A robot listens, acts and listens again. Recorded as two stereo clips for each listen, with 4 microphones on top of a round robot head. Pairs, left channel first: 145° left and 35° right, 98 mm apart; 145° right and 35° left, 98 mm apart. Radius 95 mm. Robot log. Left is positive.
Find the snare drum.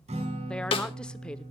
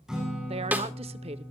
note: The snare drum: 110° left.
cmd yaw +110
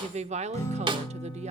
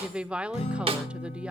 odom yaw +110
end: Found it: a snare drum, straight ahead.